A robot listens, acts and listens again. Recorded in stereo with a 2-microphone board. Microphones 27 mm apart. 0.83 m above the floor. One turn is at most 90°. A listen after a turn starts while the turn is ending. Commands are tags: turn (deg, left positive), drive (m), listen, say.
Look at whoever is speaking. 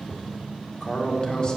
<turn deg="35"/>
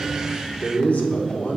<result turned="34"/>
<turn deg="90"/>
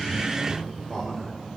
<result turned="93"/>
<turn deg="15"/>
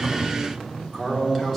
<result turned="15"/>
<say>Found it: a man speaking, straight ahead, 1 to 2 m away.</say>